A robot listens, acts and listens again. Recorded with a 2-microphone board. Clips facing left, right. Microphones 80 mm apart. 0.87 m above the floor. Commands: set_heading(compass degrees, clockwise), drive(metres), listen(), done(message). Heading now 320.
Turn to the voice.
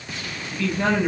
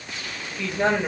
set_heading(345)
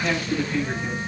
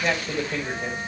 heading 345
set_heading(115)
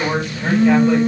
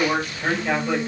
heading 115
done("Facing the man speaking, over 4 m away.")